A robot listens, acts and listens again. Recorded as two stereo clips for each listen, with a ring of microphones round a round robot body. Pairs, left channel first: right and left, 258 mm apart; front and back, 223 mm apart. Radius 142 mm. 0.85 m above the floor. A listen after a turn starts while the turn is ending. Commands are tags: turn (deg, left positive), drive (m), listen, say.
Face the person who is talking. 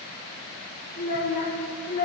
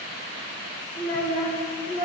<turn deg="35"/>
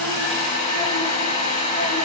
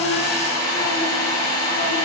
<listen/>
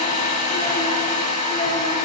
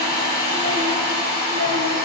<listen/>
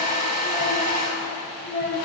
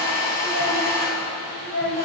<turn deg="-15"/>
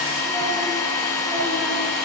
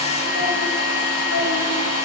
<listen/>
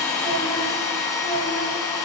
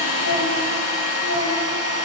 <listen/>
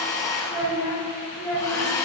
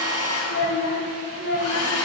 <say>Found it: a child speaking, straight ahead, 2 to 4 m away.</say>